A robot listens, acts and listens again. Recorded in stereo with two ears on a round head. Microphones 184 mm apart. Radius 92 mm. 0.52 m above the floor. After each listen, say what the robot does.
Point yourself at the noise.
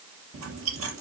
Turn 90° right.
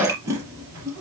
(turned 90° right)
Turn 15° right.
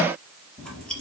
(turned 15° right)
Found it: chewing, straight ahead.